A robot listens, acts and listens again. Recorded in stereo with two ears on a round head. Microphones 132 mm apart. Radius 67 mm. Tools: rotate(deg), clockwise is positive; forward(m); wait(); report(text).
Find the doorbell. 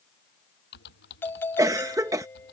rotate(-30)
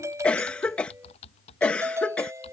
rotate(20)
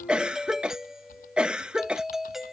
report("Found it: a doorbell, straight ahead.")